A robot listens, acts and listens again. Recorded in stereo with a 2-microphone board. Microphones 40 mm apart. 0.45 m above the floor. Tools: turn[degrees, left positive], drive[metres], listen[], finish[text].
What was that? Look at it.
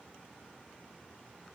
Action: listen[]
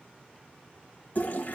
Thought: The toilet flushing: about 45° left or 135° left.
Action: turn[45]
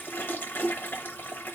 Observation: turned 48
Thought: So it is at 85° left.
Action: turn[85]
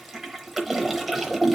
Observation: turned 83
Action: finish[Facing the toilet flushing.]